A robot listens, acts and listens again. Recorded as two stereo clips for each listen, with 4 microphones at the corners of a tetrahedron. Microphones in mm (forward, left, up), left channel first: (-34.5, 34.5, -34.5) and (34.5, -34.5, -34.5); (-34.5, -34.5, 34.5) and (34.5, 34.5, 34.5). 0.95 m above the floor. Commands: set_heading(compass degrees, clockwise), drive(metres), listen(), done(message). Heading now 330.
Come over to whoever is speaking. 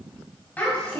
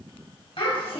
set_heading(125)
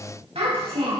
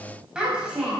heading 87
set_heading(122)
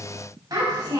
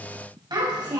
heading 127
drive(1.0)
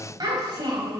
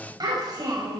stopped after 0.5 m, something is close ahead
done("Blocked. The child speaking is further on, straight ahead.")